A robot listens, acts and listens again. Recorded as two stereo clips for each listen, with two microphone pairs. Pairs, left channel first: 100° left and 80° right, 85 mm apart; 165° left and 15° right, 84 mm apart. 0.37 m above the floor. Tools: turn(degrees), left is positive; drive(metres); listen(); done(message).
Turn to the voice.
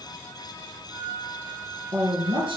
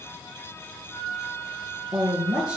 turn(degrees=-100)
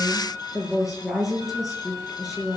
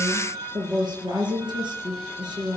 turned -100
done("Facing the woman speaking, over 4 m away.")